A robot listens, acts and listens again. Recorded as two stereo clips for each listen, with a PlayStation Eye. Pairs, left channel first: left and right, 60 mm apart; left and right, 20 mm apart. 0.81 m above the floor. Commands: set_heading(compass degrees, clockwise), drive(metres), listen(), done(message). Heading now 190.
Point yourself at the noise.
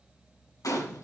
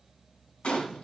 set_heading(100)
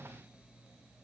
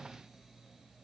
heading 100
done("I heard a gunshot from this way, but can't make it out now.")